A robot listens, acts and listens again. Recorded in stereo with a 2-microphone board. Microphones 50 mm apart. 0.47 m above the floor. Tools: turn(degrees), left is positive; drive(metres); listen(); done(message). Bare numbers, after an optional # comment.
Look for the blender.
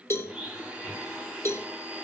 # The blender: about 20° right or 160° right.
turn(-20)
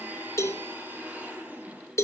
# So it is at 145° right.
turn(-145)
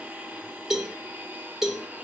# The blender is now 35° right.
turn(-35)
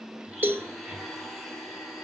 done("Found it: a blender, straight ahead.")